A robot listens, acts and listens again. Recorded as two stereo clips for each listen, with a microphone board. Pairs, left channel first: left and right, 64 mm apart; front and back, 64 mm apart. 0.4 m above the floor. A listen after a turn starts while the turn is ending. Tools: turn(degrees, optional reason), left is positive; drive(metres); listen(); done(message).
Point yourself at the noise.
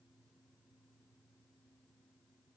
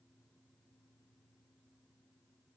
listen()
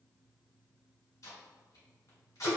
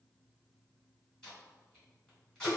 turn(degrees=80, reason="The tape being pulled: 80° left.")
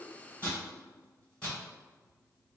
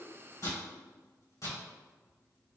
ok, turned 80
turn(degrees=20, reason="The tape being pulled is now 20° left.")
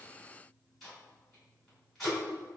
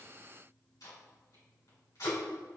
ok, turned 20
done("Facing the tape being pulled, 2 to 4 m away.")